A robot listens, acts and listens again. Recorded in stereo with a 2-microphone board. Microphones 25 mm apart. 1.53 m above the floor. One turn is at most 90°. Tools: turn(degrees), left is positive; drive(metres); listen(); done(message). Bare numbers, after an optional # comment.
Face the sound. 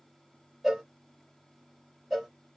turn(-30)
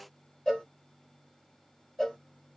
# So it is at 25° left.
turn(25)
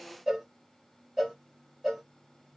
done("Facing the cowbell.")